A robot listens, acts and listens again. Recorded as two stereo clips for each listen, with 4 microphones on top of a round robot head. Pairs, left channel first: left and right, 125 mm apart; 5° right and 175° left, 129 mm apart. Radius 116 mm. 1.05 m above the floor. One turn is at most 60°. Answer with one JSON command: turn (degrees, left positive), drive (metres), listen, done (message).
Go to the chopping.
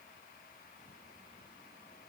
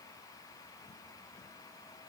{"listen": true}
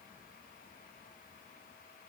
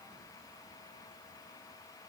{"listen": true}
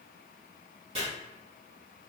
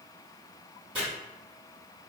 {"turn": -60}
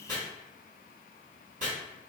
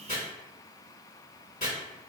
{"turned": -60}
{"turn": -55}
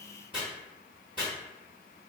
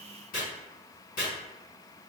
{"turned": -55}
{"turn": -10}
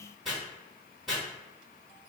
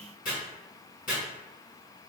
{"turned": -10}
{"drive": 1.0}
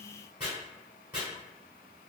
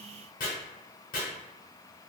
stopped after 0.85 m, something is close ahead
{"turn": -10}
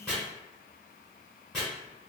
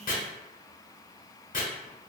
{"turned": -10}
{"done": "Arrived at the chopping, straight ahead."}